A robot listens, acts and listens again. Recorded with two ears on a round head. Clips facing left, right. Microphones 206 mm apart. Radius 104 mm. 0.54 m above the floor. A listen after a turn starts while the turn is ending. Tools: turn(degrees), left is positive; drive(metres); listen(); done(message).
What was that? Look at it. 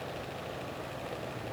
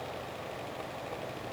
listen()
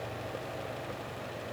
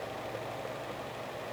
listen()
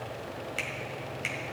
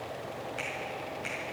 turn(degrees=35)
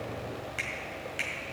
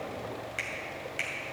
done("Found it: a finger snap, straight ahead.")